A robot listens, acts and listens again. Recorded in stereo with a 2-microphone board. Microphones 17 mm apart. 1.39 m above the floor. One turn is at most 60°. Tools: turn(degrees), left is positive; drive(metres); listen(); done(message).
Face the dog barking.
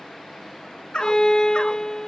turn(degrees=60)
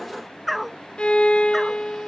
done("Found it: a dog barking, straight ahead.")